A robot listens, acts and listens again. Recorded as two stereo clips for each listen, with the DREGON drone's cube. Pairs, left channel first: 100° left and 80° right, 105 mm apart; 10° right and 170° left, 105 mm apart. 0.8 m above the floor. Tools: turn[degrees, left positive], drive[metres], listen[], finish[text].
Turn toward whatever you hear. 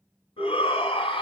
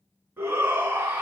Thought: The shout: 95° left.
Action: turn[95]
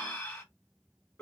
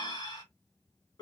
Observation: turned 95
Thought: The shout is now 20° left.
Action: turn[20]
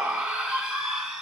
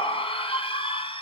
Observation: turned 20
Action: finish[Facing the shout, 1 to 2 m away.]